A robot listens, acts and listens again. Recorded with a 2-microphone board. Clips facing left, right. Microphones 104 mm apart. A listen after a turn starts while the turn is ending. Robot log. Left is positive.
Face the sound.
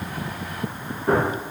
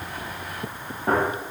note: The gunshot: about 50° right or 130° right.
cmd yaw -50
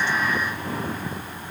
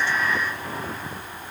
cmd idle
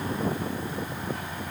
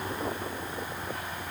end: I heard a gunshot, but can't make it out now. It was about straight ahead or 80° right.